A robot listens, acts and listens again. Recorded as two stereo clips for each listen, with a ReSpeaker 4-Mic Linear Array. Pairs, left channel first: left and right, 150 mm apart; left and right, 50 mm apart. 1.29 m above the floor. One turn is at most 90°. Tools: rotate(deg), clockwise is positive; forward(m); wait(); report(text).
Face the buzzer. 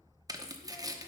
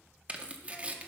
wait()
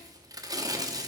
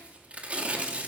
wait()
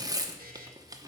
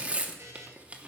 rotate(70)
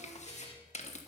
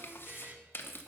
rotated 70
rotate(40)
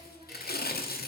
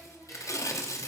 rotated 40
wait()
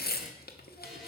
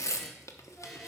wait()
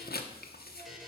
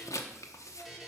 report("Found it: a buzzer, straight ahead, 1 to 2 m away.")